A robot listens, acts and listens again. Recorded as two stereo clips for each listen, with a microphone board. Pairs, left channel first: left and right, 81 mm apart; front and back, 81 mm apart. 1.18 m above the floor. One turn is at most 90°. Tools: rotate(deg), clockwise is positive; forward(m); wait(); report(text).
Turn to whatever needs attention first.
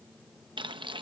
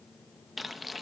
wait()
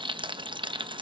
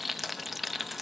wait()
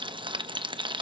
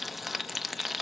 report("I can't make out anything urgent to turn to.")